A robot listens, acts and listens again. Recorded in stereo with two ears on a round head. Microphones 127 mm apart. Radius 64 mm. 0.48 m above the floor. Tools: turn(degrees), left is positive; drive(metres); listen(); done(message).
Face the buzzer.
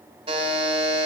turn(degrees=-35)
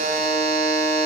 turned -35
turn(degrees=-100)
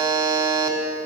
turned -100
turn(degrees=-35)
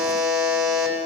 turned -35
turn(degrees=-10)
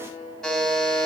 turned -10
done("Found it: a buzzer, straight ahead.")